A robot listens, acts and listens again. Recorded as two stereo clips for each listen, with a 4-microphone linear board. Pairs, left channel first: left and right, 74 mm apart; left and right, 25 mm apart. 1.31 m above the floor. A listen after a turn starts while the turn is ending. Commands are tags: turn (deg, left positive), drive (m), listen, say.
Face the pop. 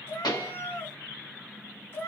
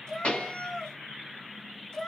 <turn deg="70"/>
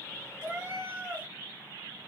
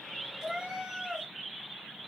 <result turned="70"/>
<listen/>
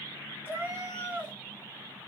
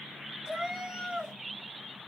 <say>I heard a pop, but can't make it out now. It was about straight ahead or 40° left.</say>